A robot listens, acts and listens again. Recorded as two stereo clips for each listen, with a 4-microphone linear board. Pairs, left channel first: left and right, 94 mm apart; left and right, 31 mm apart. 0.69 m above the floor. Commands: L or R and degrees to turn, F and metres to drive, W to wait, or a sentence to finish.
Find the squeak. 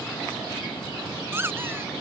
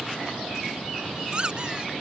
R25
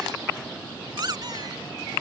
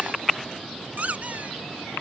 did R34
R115
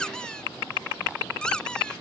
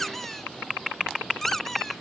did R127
L10
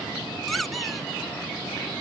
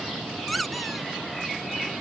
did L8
Found it: a squeak, straight ahead.